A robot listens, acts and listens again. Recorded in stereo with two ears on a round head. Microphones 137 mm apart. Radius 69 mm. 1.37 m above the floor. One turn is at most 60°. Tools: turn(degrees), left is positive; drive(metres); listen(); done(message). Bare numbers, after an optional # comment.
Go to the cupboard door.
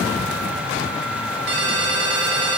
listen()
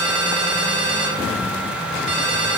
listen()
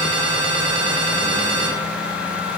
done("I can't make out a cupboard door to turn to.")